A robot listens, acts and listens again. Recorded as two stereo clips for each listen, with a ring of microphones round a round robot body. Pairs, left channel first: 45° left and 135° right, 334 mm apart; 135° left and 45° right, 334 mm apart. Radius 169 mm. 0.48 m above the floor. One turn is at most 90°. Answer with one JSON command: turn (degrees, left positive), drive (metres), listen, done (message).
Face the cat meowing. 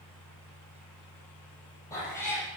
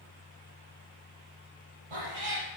{"turn": -40}
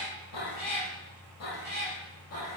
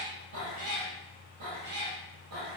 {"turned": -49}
{"done": "Facing the cat meowing."}